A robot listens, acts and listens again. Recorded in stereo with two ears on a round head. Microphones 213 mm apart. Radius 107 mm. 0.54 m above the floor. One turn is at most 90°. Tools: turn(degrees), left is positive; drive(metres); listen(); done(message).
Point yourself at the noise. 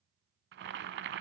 turn(degrees=-45)
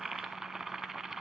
done("Found it: boiling, straight ahead.")